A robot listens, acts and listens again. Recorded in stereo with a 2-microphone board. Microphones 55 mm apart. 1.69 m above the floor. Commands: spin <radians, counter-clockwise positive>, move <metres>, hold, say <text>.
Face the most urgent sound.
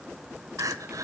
spin -1.57
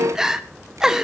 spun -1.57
spin -0.17
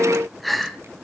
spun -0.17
say Facing the crying.